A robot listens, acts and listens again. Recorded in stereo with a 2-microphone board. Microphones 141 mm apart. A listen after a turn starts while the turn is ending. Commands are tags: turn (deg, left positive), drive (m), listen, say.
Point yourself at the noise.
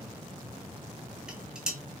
<turn deg="-30"/>
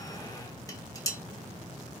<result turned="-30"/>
<turn deg="25"/>
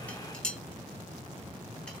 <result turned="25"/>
<say>Found it: dishes clattering, straight ahead.</say>